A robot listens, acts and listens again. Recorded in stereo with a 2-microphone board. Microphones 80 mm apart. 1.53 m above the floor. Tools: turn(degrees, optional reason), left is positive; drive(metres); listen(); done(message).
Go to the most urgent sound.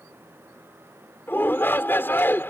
turn(degrees=25, reason="The shout: about 25° left or 155° left.")
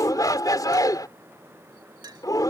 turn(degrees=130, reason="So it is at 130° left.")
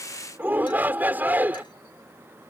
turn(degrees=-25, reason="The shout is now 25° right.")
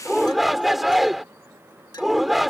drive(metres=1.0)
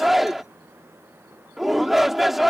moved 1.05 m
drive(metres=1.0)
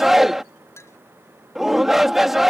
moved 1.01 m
drive(metres=1.0)
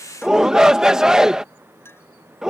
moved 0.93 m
turn(degrees=-10, reason="The shout is now 10° right.")
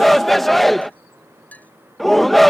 drive(metres=1.0)
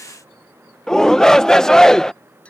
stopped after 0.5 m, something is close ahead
done("I am next to the shout.")